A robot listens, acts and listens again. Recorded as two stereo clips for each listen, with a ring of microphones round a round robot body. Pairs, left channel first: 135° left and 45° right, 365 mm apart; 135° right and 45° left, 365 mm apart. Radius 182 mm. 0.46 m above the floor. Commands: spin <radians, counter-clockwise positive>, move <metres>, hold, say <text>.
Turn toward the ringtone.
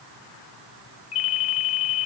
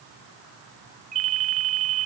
spin 1.75
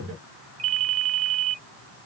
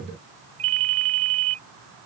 spin 0.17
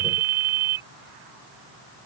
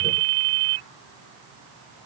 say Found it: a ringtone, straight ahead.